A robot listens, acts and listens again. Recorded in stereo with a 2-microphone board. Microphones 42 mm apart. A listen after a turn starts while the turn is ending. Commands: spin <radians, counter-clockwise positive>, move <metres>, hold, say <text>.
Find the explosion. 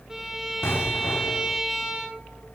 spin 1.57
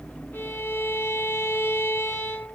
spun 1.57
say I heard an explosion from this way, but can't make it out now.